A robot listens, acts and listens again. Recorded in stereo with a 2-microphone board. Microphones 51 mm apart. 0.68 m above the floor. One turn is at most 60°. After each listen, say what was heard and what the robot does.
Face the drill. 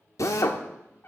The drill: about 70° left or 110° left. Turn 60° left.
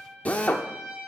So it is at 30° left. Turn 30° left.
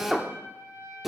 The drill is now 10° right. Turn 10° right.
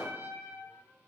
Keep listening.
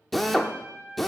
Found it: a drill, straight ahead.